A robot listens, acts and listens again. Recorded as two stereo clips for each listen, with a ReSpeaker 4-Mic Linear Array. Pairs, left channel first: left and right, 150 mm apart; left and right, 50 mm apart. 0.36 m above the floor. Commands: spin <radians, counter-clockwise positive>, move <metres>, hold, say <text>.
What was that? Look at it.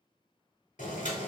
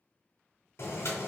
spin 1.05
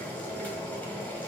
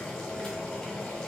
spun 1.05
spin 0.26
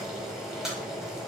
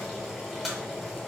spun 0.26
say Facing the boiling.